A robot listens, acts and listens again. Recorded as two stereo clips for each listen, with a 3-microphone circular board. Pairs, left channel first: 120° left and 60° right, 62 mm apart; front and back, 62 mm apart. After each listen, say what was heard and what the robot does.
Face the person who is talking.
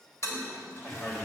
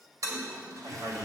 The man speaking: 165° right. Turn 165° right.
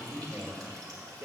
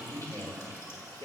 The man speaking is now 15° right. Turn 15° right.
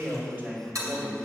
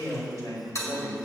Found it: a man speaking, straight ahead.